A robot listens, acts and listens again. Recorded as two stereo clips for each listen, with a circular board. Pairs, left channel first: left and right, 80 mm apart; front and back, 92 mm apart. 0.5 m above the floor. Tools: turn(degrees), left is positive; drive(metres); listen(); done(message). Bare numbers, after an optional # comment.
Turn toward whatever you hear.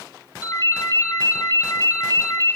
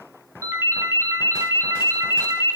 # The ringtone: 125° left.
turn(125)
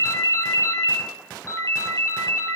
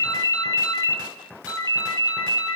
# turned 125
# The ringtone is now 40° left.
turn(40)
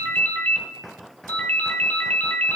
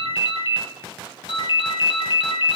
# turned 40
# The ringtone is now 15° left.
turn(15)
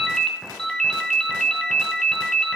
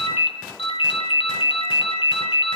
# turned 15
done("Facing the ringtone.")